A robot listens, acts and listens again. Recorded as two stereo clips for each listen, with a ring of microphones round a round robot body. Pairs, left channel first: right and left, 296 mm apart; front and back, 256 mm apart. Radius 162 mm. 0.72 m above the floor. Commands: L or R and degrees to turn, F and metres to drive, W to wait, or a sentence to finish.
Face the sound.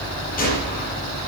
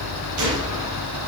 R155
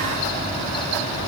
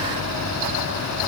I heard a gunshot from this way, but can't make it out now.